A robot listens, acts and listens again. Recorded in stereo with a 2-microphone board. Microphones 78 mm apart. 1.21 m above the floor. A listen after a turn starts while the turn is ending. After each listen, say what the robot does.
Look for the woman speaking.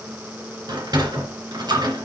Keep listening.
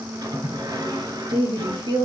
Turn 90° right.
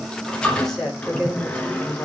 Turn 15° left.
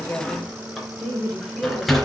Facing the woman speaking.